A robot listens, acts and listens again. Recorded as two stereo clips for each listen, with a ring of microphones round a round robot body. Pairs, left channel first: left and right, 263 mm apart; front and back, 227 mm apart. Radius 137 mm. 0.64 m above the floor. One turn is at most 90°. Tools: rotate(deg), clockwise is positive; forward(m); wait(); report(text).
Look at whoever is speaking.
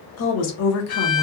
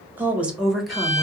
rotate(-90)
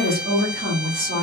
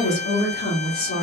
rotate(50)
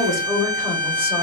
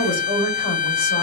report("Facing the woman speaking, 2 to 4 m away.")